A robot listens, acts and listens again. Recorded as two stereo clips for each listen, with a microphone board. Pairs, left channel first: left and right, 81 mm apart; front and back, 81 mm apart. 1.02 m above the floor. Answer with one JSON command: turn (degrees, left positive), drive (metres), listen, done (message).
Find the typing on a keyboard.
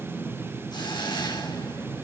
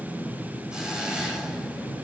{"listen": true}
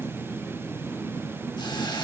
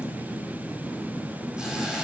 {"listen": true}
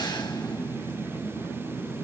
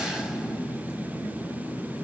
{"done": "I can't make out typing on a keyboard to turn to."}